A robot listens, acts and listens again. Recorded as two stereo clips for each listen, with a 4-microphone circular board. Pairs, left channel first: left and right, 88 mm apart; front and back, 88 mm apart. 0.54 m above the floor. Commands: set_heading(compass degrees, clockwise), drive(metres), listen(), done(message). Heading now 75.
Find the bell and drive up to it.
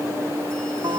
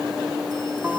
listen()
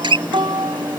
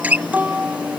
listen()
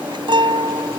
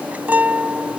done("I can't make out a bell, only a guitar.")